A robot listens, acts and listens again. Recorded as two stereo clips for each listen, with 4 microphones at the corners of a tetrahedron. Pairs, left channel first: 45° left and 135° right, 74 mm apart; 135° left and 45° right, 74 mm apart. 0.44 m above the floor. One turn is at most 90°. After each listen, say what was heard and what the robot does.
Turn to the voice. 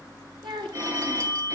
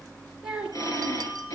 The child speaking: 120° right. Turn 90° right.
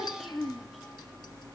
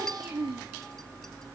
The child speaking is now 40° right. Turn 40° right.
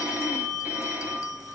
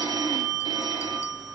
Keep listening.
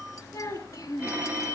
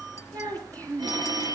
Facing the child speaking.